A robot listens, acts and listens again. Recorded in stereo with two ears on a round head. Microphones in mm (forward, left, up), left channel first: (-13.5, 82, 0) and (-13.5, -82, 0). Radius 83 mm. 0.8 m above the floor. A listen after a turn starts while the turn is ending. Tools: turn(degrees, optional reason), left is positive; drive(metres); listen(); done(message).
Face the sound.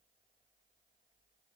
listen()
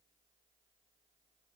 listen()
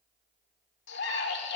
turn(degrees=70, reason="The scream: about 70° left or 110° left.")
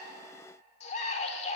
turn(degrees=35, reason="So it is at 35° left.")
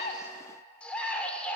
done("Facing the scream, 1 to 2 m away.")